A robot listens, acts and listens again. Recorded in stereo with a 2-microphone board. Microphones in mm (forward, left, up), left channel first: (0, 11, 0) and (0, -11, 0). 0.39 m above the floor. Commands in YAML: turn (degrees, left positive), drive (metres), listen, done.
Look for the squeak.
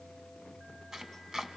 listen: true
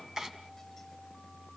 listen: true
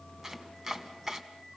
done: "I can't make out a squeak to turn to."